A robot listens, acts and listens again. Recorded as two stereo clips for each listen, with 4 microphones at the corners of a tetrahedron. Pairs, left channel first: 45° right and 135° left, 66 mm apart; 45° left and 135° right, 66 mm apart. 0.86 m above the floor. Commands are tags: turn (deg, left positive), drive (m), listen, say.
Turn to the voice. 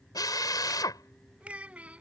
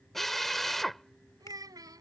<turn deg="-155"/>
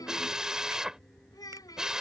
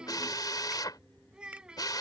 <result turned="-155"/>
<turn deg="-60"/>
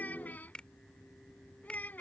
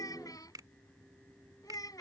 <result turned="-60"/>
<turn deg="20"/>
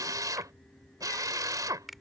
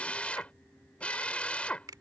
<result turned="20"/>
<listen/>
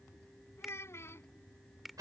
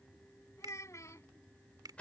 <say>Found it: a child speaking, straight ahead.</say>